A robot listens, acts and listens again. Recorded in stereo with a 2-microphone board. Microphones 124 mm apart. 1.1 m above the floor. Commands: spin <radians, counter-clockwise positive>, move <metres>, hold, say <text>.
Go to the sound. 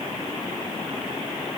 hold
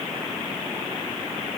hold
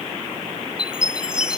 spin -0.52
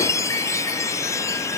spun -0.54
spin 0.44
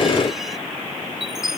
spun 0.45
move 1.0
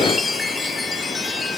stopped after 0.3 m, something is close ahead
say Blocked. The chime is further on, straight ahead.